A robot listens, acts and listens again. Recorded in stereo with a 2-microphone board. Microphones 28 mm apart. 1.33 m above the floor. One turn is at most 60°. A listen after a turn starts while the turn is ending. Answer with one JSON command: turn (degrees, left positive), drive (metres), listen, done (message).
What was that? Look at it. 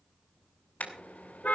{"turn": 60}
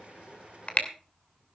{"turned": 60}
{"turn": 55}
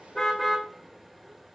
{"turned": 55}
{"done": "Facing the car horn, 2 to 4 m away."}